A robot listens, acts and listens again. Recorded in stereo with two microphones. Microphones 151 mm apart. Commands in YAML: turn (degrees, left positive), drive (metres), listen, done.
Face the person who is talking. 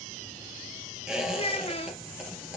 turn: 40
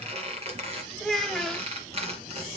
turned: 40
done: "Facing the child speaking, 1 to 2 m away."